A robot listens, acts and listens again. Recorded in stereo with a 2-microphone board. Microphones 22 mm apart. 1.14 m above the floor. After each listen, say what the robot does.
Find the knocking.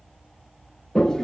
Keep listening.
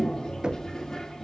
Turn 40° right.
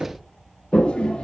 Turn 95° right.
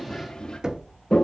Turn 35° right.
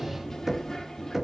Turn 15° right.
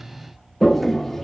Keep listening.
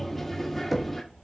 Facing the knocking, under 1 m away.